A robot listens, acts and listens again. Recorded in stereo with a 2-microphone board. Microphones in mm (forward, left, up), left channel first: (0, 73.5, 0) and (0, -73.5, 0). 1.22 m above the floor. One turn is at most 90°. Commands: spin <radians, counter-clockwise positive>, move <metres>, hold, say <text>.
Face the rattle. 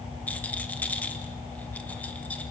spin 0.52
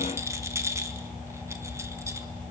spin -0.35
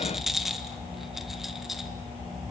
say Found it: a rattle, straight ahead.